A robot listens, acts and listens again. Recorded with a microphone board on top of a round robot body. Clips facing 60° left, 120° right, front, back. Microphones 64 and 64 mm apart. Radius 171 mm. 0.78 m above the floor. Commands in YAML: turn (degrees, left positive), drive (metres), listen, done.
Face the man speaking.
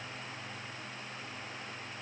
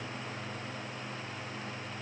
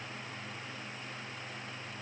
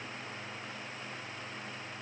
listen: true
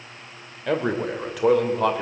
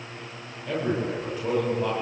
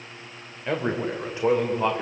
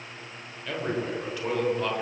turn: 70
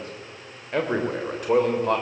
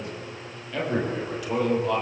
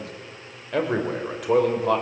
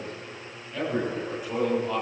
turn: 20
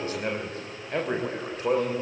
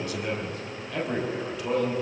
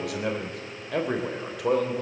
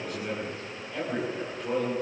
done: "Found it: a man speaking, straight ahead."